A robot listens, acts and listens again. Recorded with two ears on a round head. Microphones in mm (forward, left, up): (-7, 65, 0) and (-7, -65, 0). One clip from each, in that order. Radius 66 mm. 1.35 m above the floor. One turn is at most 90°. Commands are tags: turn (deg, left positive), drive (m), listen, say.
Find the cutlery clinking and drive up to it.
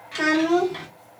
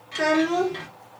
<listen/>
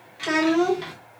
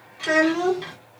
<listen/>
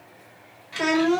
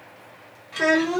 <say>I can't make out cutlery clinking, only a child speaking.</say>